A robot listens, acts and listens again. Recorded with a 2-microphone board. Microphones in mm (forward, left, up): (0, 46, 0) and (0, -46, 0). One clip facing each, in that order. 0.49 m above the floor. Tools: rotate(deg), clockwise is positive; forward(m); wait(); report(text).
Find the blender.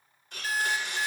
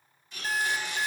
rotate(-60)
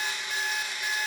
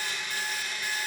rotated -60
rotate(-25)
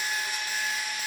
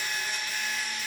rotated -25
rotate(-10)
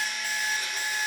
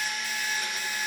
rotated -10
report("Facing the blender.")